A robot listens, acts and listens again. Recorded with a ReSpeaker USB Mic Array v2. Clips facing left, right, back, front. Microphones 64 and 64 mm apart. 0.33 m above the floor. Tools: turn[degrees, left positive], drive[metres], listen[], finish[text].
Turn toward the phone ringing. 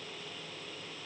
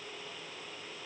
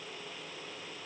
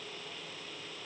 Action: listen[]
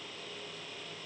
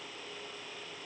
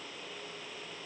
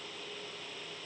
Action: listen[]
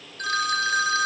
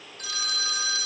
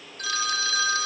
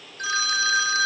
Thought: The phone ringing: 65° left.
Action: turn[65]
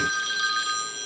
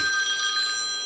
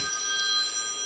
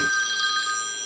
Action: finish[Found it: a phone ringing, straight ahead, 1 to 2 m away.]